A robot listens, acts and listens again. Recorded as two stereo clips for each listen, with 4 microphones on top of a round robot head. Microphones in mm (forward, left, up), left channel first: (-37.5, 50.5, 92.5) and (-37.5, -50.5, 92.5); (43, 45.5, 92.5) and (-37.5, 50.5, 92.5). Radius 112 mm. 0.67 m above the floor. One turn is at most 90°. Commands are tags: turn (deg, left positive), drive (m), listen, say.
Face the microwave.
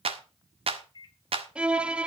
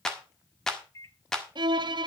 <turn deg="45"/>
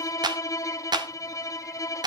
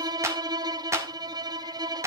<listen/>
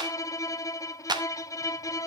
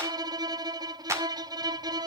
<listen/>
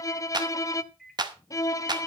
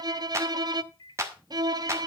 <say>Facing the microwave.</say>